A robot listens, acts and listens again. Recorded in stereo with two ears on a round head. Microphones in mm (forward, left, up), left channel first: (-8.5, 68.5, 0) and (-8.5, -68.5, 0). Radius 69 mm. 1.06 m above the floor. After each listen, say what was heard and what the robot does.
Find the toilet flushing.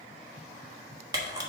Keep listening.
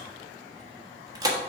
Keep listening.
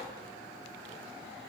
I can't make out a toilet flushing, only a camera shutter.